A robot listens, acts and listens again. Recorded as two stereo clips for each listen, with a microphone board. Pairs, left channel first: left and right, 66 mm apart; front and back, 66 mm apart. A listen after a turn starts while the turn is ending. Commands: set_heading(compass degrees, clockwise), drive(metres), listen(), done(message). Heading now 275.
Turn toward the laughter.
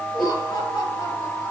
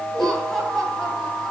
set_heading(185)
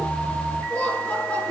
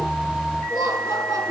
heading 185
set_heading(170)
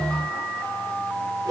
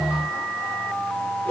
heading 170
listen()
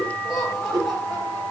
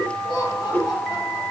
done("Facing the laughter, over 4 m away.")